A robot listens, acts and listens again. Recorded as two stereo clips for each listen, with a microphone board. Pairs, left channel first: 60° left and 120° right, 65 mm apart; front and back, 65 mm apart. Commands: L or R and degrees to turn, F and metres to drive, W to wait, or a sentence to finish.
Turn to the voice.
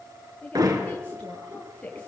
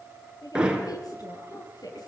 R10
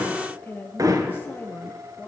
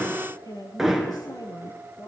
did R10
Facing the woman speaking, over 4 m away.